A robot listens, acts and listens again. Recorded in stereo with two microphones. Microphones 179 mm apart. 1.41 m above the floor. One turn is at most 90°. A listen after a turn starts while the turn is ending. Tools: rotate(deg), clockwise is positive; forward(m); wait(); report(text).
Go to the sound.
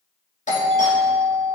rotate(-45)
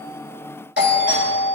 rotate(-90)
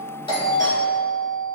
rotate(-20)
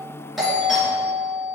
forward(1.0)
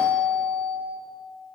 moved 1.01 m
forward(1.0)
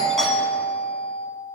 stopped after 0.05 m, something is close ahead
report("I am next to the doorbell.")